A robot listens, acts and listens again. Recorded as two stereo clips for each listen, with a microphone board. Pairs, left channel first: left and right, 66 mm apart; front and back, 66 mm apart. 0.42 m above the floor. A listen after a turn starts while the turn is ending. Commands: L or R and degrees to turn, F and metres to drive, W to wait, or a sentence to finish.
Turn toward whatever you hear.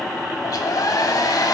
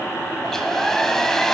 L85
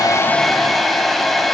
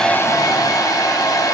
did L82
Found it: a hair dryer, straight ahead.